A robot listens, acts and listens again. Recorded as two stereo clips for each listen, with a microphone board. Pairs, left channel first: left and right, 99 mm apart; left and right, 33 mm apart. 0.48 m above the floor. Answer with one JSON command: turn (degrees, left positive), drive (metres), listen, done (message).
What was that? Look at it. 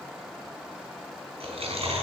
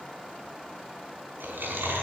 {"turn": -90}
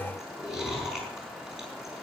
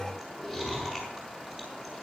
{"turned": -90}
{"done": "Facing the chewing."}